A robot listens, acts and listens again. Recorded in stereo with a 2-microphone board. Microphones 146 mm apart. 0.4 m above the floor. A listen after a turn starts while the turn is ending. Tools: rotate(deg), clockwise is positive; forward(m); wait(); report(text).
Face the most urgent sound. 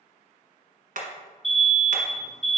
rotate(-30)
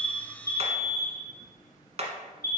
rotate(-150)
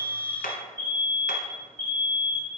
rotate(-20)
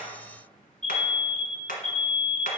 rotate(-10)
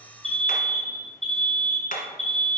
report("Facing the alarm.")